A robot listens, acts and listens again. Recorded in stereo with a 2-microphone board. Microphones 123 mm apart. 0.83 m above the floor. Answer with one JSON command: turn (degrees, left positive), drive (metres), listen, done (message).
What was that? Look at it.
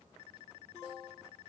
{"listen": true}
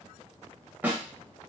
{"turn": -30}
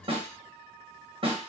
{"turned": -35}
{"turn": -130}
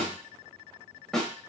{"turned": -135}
{"done": "Facing the snare drum."}